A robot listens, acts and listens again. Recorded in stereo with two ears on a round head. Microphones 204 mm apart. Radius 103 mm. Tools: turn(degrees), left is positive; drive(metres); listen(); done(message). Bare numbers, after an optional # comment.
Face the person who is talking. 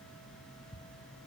listen()
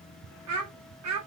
# The child speaking: about 75° right or 105° right.
turn(-75)
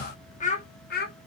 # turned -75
# So it is at 40° left.
turn(40)
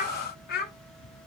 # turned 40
# The child speaking is now 45° left.
turn(45)
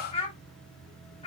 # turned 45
# The child speaking is now 25° left.
turn(25)
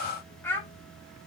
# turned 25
# The child speaking is now 10° left.
turn(10)
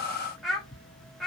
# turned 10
done("Facing the child speaking, 1 to 2 m away.")